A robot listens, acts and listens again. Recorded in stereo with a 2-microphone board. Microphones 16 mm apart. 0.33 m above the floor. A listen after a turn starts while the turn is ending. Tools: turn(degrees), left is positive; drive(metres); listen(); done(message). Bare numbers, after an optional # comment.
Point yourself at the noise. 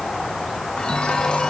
# The chime: about 70° left or 110° left.
turn(70)
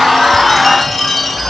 done("Facing the chime, 2 to 4 m away.")